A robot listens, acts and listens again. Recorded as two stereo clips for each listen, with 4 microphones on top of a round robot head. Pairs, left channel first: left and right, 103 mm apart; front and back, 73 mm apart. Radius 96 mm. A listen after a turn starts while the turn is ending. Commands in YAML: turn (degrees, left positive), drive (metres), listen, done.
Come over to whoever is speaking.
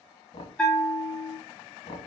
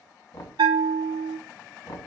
listen: true
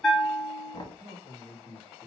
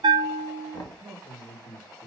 turn: -125
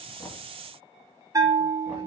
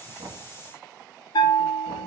listen: true
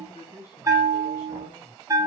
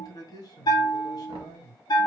turn: 35
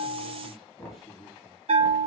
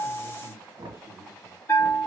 drive: 1.0
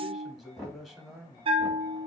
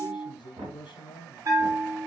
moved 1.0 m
drive: 1.0
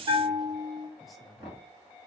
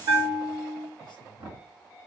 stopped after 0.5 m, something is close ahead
done: "I am next to the man speaking."